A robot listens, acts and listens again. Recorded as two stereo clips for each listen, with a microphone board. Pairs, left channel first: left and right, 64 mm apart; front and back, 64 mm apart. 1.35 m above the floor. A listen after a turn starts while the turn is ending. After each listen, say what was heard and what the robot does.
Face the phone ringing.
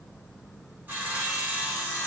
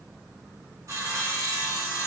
Keep listening.
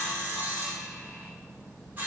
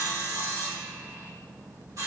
Keep listening.
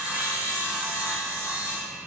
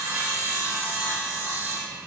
I can't make out a phone ringing to turn to.